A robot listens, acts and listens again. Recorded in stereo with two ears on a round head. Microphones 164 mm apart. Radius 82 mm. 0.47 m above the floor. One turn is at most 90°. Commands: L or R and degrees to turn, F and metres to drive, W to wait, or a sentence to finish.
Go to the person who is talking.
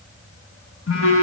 W
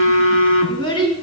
L25
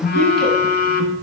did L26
W
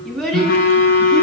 F1.0
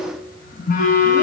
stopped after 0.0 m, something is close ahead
W
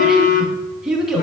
Blocked. The child speaking is further on, straight ahead.